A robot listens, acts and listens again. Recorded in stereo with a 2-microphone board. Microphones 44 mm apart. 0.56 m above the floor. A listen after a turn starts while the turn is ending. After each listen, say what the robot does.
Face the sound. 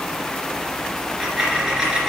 Turn 20° right.
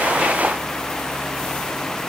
Keep listening.
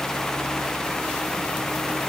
I heard a dropped coin, but can't make it out now. It was about straight ahead or 140° right.